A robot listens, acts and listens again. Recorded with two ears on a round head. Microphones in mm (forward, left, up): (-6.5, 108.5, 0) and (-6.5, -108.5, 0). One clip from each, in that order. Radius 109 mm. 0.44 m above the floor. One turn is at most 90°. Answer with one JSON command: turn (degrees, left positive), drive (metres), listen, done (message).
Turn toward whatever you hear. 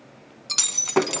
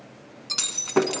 {"turn": 25}
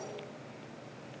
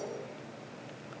{"listen": true}
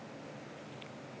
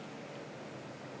{"done": "I heard breaking glass, but can't make it out now. It was about straight ahead or 130° left."}